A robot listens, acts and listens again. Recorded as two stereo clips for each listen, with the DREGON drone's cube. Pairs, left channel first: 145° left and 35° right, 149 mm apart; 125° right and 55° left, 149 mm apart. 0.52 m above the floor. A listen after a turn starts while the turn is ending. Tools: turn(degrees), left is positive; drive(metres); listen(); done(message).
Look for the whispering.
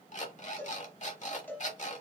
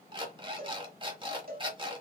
listen()
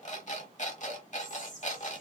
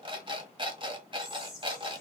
turn(degrees=145)
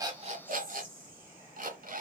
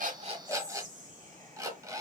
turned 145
turn(degrees=25)
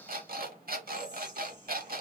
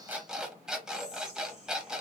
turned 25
done("Facing the whispering.")